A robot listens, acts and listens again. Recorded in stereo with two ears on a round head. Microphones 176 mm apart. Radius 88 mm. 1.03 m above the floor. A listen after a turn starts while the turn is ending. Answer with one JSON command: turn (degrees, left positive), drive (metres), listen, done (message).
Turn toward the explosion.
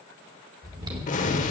{"turn": 40}
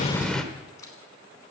{"done": "Found it: an explosion, straight ahead, 1 to 2 m away."}